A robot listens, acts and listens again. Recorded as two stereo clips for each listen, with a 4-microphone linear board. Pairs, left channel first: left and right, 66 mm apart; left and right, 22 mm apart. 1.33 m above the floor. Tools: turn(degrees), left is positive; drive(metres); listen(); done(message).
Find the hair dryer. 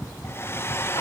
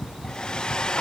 turn(degrees=35)
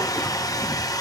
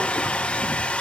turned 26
turn(degrees=120)
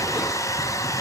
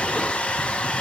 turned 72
turn(degrees=50)
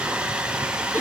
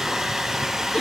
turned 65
turn(degrees=-15)
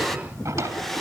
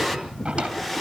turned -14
done("Found it: a hair dryer, straight ahead, 1 to 2 m away.")